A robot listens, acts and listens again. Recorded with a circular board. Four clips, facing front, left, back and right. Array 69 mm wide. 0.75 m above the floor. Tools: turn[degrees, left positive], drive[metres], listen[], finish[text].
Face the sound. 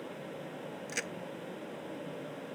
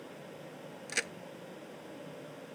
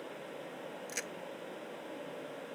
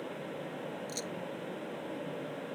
Thought: The crack: 75° left.
Action: turn[75]
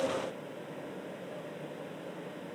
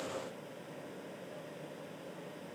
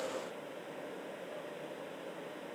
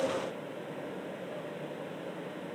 Action: finish[Facing where the crack came from. I can't hear it now.]